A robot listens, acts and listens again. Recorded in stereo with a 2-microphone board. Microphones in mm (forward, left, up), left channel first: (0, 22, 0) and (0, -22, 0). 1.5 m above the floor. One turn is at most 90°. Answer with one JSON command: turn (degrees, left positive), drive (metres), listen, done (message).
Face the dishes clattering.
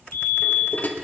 {"turn": 45}
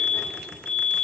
{"listen": true}
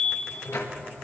{"turn": 90}
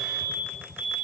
{"listen": true}
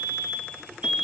{"listen": true}
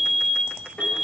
{"turn": 25}
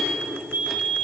{"listen": true}
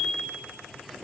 {"listen": true}
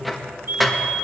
{"done": "Found it: dishes clattering, straight ahead, 1 to 2 m away."}